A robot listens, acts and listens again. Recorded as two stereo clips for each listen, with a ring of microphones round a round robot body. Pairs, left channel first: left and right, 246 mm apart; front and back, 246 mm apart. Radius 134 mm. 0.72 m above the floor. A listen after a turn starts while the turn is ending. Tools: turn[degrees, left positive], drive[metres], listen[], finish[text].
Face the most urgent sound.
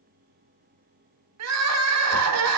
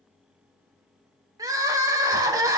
Thought: The crying: 105° right.
Action: turn[-105]
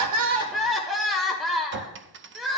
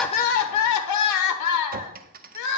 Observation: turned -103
Action: finish[Facing the crying, 1 to 2 m away.]